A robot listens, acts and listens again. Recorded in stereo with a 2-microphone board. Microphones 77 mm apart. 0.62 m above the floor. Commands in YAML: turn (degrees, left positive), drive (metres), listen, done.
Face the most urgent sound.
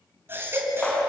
turn: -30
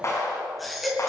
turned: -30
done: "Found it: a baby crying, straight ahead."